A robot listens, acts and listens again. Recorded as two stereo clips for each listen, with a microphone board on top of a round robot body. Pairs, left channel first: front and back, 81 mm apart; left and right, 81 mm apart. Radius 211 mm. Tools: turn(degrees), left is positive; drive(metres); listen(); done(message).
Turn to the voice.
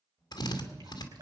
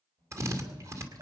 turn(degrees=-80)
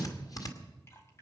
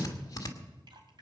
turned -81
listen()
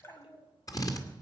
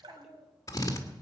done("Facing the child speaking, 2 to 4 m away.")